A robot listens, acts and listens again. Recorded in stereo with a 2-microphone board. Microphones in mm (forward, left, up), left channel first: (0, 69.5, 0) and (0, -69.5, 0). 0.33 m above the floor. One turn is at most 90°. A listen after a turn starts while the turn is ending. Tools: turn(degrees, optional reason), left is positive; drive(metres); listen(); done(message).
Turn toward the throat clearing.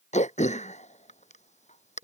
turn(degrees=55, reason="The throat clearing: about 55° left or 125° left.")
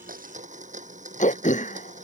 turn(degrees=65, reason="So it is at 65° left.")
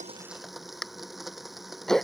done("Facing the throat clearing.")